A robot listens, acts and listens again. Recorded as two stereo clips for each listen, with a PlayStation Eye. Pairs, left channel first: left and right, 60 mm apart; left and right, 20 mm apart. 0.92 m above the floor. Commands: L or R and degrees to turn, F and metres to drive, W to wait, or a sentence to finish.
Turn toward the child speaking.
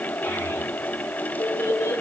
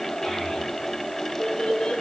L60
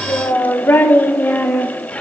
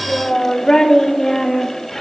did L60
L25
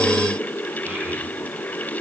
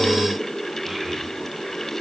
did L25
W
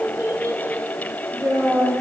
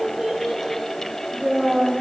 R50
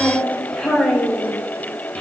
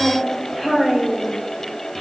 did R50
L15
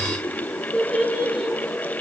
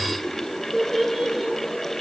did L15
Facing the child speaking.